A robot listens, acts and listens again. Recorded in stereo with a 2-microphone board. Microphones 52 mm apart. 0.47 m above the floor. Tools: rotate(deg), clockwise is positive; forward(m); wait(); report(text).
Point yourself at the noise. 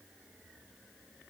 wait()
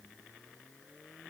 wait()
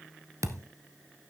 rotate(90)
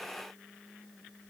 report("Facing where the thud came from. I can't hear it now.")